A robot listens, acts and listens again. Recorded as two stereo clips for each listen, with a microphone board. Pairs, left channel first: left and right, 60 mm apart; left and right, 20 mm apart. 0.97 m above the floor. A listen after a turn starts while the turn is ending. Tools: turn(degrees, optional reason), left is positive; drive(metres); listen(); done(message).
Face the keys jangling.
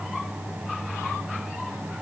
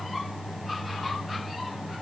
listen()
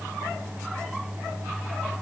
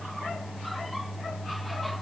listen()
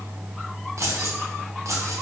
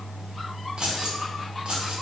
turn(degrees=-60, reason="The keys jangling: about 60° right or 120° right.")
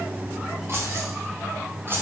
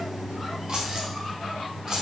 turn(degrees=-40, reason="So it is at 40° right.")
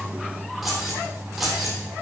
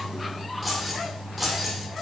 done("Facing the keys jangling.")